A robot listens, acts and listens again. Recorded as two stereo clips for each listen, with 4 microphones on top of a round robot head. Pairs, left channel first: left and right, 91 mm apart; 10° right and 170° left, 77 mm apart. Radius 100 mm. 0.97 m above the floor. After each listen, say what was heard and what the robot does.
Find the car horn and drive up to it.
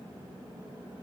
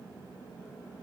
Keep listening.
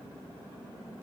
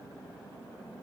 Keep listening.
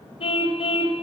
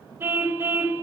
The car horn: 110° left. Turn 110° left.
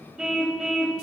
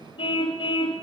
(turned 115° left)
Drive 1.0 m forward.
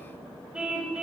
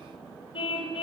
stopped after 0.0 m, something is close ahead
Something is in my way. I am facing the car horn but have not reached it.